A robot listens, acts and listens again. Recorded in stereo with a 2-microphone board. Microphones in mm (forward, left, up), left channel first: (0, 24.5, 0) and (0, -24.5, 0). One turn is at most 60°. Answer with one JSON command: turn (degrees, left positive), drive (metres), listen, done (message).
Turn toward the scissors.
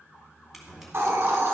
{"turn": -30}
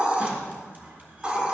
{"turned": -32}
{"listen": true}
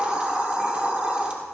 {"listen": true}
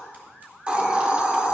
{"done": "I heard scissors, but can't make it out now. It was about 30° left or 145° right."}